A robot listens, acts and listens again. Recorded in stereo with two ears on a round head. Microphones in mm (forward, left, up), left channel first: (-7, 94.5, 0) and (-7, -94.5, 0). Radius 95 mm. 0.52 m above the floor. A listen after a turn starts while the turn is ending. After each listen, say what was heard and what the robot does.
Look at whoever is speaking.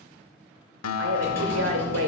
The woman speaking: about 65° right or 115° right. Turn 65° right.
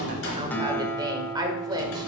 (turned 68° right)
So it is at 20° right. Turn 20° right.
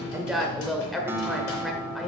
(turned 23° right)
Found it: a woman speaking, straight ahead, 1 to 2 m away.